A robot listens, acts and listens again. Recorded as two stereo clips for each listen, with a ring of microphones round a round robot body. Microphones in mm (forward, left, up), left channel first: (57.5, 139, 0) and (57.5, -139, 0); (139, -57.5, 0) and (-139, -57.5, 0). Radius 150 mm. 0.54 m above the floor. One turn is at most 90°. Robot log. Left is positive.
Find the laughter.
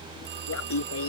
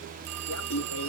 note: The laughter: 50° left.
cmd yaw +50
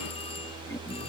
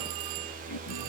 cmd idle
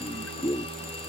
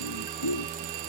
note: The laughter is now 10° left.
cmd yaw +10
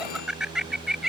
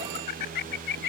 end: Found it: laughter, straight ahead.